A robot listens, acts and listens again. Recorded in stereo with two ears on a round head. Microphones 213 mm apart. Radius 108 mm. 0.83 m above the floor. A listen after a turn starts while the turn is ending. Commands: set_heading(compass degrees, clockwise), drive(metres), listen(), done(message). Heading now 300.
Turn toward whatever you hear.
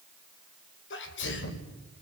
set_heading(245)
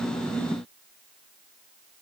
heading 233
listen()
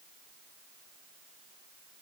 done("I heard a sneeze, but can't make it out now. It was about 15° right or 60° left.")